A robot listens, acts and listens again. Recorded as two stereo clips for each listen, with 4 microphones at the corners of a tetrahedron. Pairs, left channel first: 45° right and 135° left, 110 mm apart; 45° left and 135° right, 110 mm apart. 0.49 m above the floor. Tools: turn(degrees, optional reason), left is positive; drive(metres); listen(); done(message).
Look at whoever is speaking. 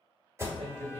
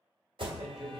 turn(degrees=145, reason="The man speaking: 145° left.")
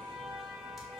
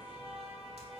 listen()
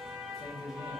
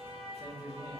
turn(degrees=-10, reason="The man speaking is now 10° right.")
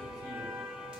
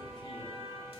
listen()
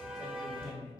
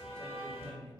done("Found it: a man speaking, straight ahead.")